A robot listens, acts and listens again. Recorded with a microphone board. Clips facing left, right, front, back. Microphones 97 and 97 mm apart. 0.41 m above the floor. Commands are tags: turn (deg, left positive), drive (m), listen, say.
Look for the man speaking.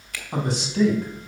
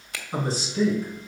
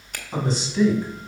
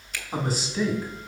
<turn deg="95"/>
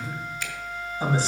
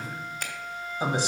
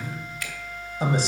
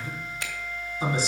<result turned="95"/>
<turn deg="-20"/>
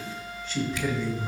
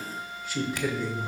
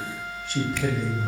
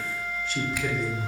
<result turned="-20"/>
<turn deg="-20"/>
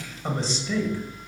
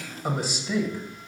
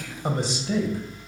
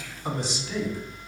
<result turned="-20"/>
<turn deg="-15"/>
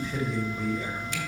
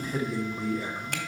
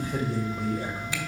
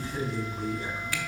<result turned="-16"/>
<say>Facing the man speaking.</say>